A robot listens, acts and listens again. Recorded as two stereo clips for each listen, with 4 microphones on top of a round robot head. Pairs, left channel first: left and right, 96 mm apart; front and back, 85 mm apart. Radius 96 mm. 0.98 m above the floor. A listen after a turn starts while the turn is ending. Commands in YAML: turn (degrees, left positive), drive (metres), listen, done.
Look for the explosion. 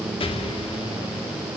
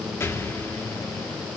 turn: 65
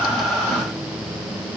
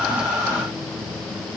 done: "I heard an explosion from this way, but can't make it out now."